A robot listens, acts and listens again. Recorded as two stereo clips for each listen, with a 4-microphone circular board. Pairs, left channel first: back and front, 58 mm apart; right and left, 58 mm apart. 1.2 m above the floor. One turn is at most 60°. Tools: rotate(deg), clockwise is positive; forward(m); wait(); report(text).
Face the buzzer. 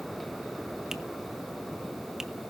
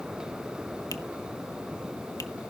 wait()
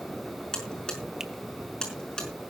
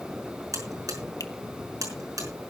rotate(-60)
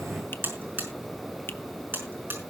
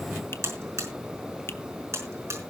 rotate(-55)
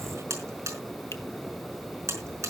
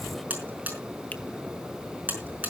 rotate(-35)
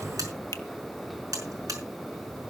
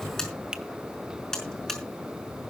rotate(10)
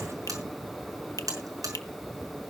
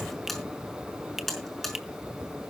report("Facing the buzzer, over 4 m away.")